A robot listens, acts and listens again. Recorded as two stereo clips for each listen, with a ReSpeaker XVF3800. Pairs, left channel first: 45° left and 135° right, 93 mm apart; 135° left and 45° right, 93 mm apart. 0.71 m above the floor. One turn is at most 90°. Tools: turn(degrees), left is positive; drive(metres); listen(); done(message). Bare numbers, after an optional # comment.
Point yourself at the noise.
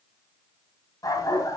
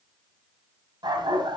done("Facing the dog barking.")